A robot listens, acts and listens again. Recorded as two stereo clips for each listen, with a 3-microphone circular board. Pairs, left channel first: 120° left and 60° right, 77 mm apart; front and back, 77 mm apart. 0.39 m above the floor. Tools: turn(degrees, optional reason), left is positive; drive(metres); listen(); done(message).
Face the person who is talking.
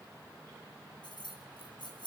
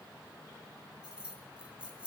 listen()
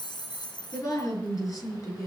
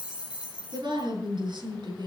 turn(degrees=165, reason="The woman speaking: 165° left.")
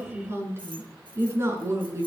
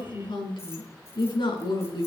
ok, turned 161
done("Found it: a woman speaking, straight ahead, over 4 m away.")